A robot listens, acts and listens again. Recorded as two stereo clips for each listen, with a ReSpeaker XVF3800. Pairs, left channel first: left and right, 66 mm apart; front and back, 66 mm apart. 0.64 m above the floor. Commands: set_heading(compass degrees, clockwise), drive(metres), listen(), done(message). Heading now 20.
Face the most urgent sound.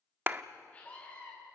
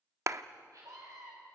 set_heading(225)
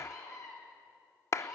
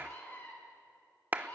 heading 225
set_heading(165)
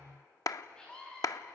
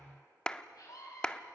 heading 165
set_heading(150)
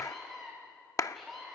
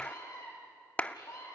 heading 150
done("Facing the scream, over 4 m away.")